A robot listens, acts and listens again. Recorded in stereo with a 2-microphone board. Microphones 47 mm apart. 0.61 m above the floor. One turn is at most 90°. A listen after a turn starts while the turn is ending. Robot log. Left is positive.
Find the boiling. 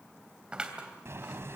note: The boiling: about 65° right or 115° right.
cmd yaw -65
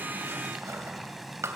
end: Facing the boiling, 1 to 2 m away.